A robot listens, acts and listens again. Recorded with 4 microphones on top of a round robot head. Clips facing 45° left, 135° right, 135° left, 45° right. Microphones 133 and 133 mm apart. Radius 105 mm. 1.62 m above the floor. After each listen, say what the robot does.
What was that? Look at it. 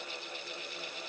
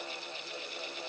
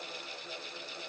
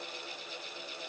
Keep listening.
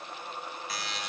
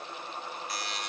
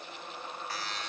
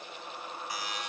Turn 35° left.
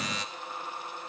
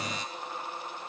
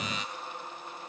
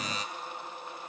Keep listening.
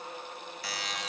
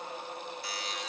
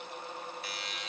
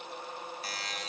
Turn 15° left.
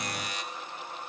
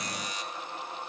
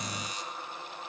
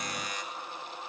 Facing the buzzer.